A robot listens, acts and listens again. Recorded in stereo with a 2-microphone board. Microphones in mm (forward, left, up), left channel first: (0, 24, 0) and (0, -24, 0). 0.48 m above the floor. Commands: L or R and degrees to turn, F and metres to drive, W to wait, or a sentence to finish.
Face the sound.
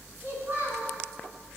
R35
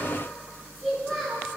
Facing the child speaking.